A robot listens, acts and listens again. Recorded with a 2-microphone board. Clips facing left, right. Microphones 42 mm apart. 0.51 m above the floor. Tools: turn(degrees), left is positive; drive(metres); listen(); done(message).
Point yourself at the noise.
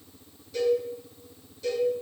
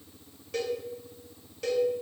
turn(degrees=-70)
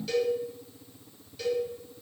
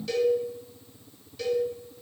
done("Found it: a cowbell, straight ahead.")